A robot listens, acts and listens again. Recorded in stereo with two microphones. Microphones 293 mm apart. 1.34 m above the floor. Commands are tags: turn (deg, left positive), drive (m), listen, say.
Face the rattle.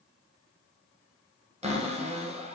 <listen/>
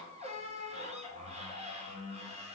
<listen/>
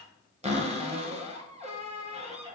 <say>I can't make out a rattle to turn to.</say>